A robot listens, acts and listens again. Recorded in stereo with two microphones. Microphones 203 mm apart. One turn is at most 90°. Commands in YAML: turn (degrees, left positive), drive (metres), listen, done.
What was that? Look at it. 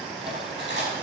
turn: -60
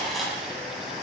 done: "Facing the cutlery clinking, over 4 m away."